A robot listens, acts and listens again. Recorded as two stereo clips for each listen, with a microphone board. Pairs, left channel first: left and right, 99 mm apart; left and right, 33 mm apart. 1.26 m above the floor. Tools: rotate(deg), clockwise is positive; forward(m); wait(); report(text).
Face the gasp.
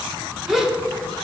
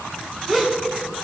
rotate(30)
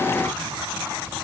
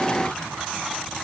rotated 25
wait()
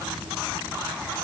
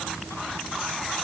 report("I heard a gasp, but can't make it out now. It was about 20° left or 150° right.")